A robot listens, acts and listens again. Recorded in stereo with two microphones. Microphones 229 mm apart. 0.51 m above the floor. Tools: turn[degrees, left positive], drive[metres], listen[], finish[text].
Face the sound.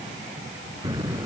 Thought: The explosion: about 15° right or 165° right.
Action: turn[-15]
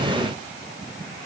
Action: listen[]
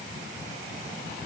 Action: finish[I heard an explosion, but can't make it out now. It was about straight ahead or 150° right.]